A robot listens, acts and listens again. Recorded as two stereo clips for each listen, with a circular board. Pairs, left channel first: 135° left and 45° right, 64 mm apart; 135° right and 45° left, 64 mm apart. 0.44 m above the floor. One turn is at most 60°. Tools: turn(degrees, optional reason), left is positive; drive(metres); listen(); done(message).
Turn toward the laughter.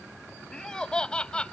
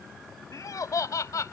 turn(degrees=-60, reason="The laughter: 150° right.")
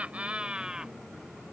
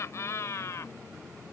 turn(degrees=-60, reason="The laughter is now 120° right.")
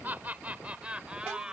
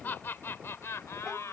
turn(degrees=-60, reason="The laughter is now 120° right.")
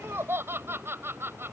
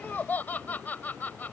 turn(degrees=-60, reason="The laughter is now 80° right.")
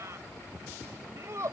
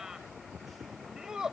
turn(degrees=-35, reason="The laughter is now 35° right.")
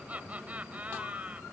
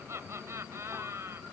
turn(degrees=15, reason="The laughter is now 15° left.")
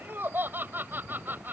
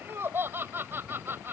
done("Facing the laughter.")